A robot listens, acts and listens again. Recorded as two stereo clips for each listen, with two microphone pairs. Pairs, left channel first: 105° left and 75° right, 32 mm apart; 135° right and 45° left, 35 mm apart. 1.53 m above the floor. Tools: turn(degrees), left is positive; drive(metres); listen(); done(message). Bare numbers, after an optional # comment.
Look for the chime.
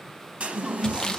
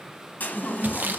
# The chime: 120° right.
turn(-120)
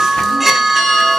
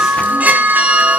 # The chime is now 15° left.
turn(15)
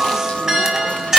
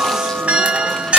done("Found it: a chime, straight ahead.")